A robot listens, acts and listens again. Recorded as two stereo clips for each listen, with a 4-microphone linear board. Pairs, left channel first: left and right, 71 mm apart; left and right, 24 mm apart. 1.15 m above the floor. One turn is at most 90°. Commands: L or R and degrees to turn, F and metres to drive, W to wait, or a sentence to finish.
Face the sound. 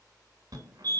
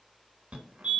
R65
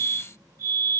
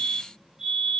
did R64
R50
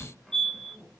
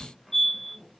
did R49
Facing the fire alarm.